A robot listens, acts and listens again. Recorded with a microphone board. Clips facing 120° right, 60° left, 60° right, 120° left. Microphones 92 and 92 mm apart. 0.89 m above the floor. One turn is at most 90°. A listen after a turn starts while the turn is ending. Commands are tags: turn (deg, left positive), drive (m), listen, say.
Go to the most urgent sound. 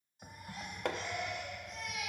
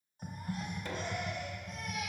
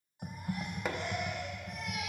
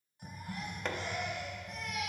<turn deg="15"/>
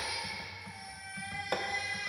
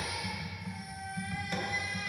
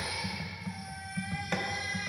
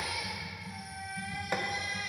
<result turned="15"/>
<drive m="1.0"/>
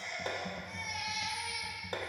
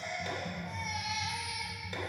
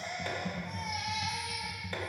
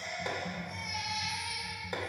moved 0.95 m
<drive m="1.0"/>
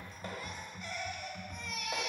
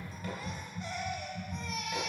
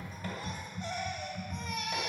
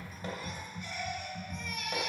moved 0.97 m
<drive m="1.0"/>
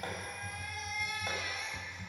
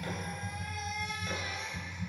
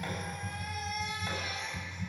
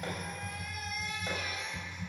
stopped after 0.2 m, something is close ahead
<say>Arrived at the baby crying, straight ahead.</say>